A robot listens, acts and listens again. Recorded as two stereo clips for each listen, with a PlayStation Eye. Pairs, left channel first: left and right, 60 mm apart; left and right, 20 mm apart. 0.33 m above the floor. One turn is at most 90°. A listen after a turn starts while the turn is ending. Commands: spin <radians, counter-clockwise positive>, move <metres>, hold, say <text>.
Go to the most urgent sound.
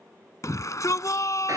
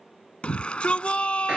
spin 1.13
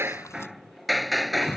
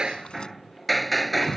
spin 0.79
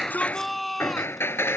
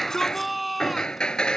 move 1.0
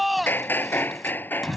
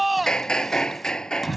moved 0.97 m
move 1.0
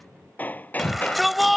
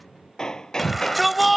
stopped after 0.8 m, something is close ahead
say Arrived at the shout, straight ahead.